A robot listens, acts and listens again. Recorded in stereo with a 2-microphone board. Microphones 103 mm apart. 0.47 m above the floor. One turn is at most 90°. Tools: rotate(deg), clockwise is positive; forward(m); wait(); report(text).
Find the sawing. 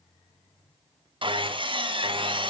rotate(55)
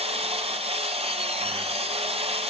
rotate(70)
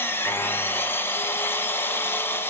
rotate(-20)
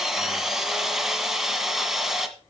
report("Found it: sawing, straight ahead, 1 to 2 m away.")